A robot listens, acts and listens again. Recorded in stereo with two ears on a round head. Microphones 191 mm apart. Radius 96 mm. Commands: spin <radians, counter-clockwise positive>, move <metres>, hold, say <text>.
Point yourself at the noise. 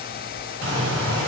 spin -1.13
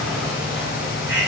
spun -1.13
spin -0.17
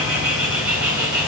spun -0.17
say Found it: a bird, straight ahead, 1 to 2 m away.